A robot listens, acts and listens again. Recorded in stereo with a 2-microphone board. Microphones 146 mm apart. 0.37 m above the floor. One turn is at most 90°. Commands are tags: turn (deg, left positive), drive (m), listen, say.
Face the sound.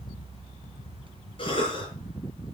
<turn deg="40"/>
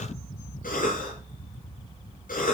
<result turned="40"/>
<turn deg="90"/>
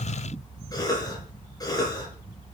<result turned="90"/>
<turn deg="25"/>
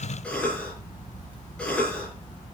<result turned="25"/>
<say>Found it: a cough, straight ahead, over 4 m away.</say>